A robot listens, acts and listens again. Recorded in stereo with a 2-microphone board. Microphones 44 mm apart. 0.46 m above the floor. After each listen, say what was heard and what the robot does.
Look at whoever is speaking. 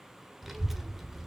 Turn 30° right.
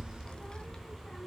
So it is at 20° left. Turn 20° left.
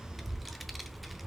Facing the child speaking.